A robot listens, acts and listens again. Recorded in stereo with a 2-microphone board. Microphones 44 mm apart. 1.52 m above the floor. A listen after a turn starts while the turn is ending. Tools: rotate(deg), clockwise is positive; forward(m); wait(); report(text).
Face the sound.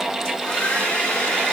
rotate(-25)
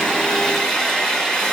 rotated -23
report("Facing the hair dryer, 2 to 4 m away.")